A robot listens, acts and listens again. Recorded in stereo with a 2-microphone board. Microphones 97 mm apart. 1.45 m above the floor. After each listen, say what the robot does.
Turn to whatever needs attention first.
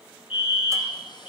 Turn 90° left.
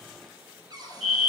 Facing the fire alarm.